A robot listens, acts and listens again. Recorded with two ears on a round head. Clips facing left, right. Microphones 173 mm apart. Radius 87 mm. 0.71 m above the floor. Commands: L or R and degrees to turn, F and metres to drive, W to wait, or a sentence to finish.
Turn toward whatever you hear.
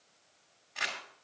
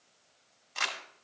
R55
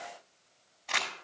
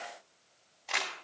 R10
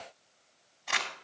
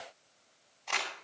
Facing the crumpling.